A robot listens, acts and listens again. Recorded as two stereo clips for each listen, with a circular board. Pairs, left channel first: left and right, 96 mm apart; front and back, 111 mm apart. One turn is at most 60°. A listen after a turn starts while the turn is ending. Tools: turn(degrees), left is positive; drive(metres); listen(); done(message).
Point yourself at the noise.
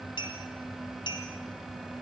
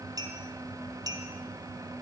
turn(degrees=60)
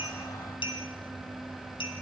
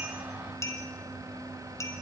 turn(degrees=60)
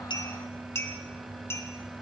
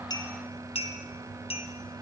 turn(degrees=25)
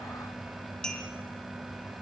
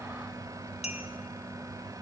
turn(degrees=10)
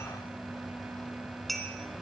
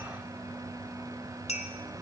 done("Found it: a clink, straight ahead, 2 to 4 m away.")